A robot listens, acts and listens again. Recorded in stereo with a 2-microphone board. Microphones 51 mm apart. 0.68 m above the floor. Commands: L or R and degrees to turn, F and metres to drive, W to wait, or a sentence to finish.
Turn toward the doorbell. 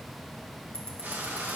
W
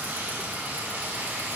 W
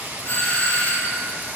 L45
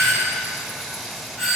Found it: a doorbell, straight ahead, 2 to 4 m away.